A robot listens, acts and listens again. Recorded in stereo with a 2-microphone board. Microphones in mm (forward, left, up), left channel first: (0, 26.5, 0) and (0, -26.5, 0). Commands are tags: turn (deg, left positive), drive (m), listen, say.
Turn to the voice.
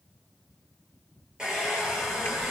<turn deg="-60"/>
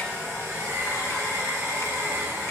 <turn deg="-60"/>
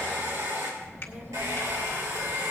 <turn deg="-45"/>
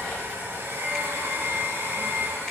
<say>Facing the child speaking.</say>